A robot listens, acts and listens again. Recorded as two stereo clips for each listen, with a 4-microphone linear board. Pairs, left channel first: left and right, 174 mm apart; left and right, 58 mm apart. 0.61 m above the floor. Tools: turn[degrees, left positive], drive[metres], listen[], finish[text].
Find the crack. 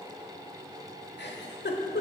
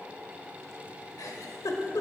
Action: listen[]
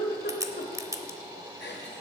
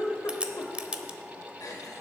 Thought: The crack: about 20° right or 160° right.
Action: turn[-20]
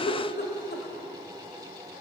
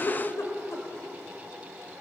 Action: listen[]
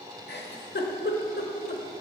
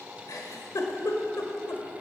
Action: finish[I heard a crack, but can't make it out now. It was about straight ahead or 140° right.]